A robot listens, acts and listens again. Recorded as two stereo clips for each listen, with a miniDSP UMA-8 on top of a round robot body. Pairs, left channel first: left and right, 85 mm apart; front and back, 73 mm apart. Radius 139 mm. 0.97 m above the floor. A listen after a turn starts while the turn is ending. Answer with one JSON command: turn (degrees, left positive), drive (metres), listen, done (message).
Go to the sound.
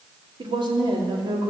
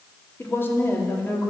{"turn": -60}
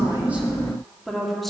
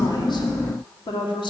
{"drive": 1.0}
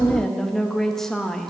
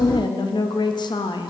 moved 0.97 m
{"drive": 1.0}
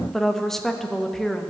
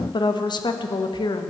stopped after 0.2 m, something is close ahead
{"done": "Arrived at the woman speaking, straight ahead."}